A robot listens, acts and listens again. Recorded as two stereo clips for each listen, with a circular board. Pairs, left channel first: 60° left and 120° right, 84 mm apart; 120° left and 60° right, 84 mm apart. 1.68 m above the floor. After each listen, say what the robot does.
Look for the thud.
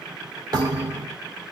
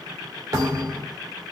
Turn 95° right.
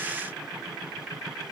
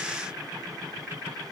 Facing where the thud came from. I can't hear it now.